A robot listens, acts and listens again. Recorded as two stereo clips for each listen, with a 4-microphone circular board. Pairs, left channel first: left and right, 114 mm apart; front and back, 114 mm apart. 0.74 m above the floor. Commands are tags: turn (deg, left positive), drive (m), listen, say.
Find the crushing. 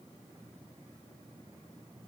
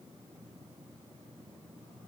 <listen/>
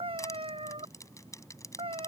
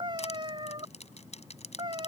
<turn deg="25"/>
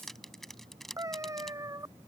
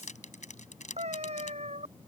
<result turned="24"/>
<say>Facing the crushing.</say>